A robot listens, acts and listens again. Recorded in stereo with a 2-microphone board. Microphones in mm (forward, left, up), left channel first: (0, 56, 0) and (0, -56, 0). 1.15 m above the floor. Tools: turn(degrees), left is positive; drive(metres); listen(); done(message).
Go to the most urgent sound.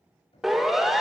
turn(degrees=30)
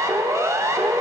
turn(degrees=-30)
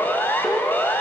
turn(degrees=20)
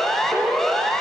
drive(metres=1.0)
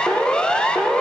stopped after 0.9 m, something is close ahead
turn(degrees=10)
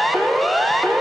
done("Arrived at the siren, straight ahead.")